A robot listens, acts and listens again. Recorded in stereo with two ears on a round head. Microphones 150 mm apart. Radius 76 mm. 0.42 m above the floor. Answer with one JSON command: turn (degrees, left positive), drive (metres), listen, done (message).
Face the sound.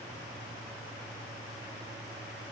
{"listen": true}
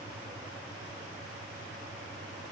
{"listen": true}
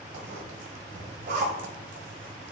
{"turn": -50}
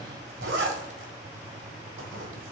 {"turn": -80}
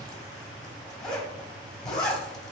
{"done": "Facing the zipper, 1 to 2 m away."}